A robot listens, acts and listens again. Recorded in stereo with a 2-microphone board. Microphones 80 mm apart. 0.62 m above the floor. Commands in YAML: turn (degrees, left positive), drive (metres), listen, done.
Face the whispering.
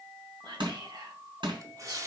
turn: -65
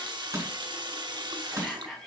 done: "Found it: whispering, straight ahead, over 4 m away."